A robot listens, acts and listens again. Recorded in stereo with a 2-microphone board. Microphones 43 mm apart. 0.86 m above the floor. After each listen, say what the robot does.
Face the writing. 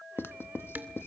Turn 60° left.
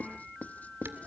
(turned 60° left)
Turn 40° left.
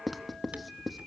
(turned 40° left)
Found it: writing, straight ahead, 1 to 2 m away.